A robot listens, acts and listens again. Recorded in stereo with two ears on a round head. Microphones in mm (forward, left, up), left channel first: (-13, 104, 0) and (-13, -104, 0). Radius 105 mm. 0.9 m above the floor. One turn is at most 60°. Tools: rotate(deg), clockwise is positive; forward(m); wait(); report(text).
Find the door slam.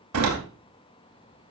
rotate(60)
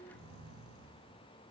rotate(30)
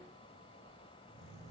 report("I heard a door slam from this way, but can't make it out now.")